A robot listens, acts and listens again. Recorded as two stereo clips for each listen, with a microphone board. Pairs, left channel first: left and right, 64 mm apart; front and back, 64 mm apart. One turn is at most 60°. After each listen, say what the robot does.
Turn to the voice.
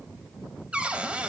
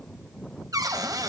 Keep listening.
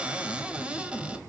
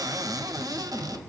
Keep listening.
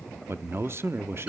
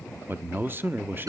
Turn 60° right.
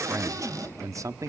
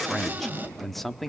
Turn 60° right.
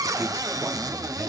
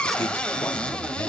Turn 25° right.
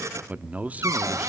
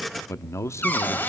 Turn 30° right.
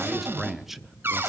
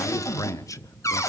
Found it: a man speaking, straight ahead.